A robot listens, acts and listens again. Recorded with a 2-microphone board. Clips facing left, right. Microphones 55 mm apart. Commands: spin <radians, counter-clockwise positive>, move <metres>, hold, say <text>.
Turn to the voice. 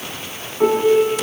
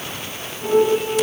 hold
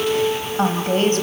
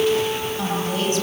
spin 0.79
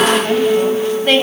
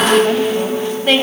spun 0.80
say Facing the woman speaking, 2 to 4 m away.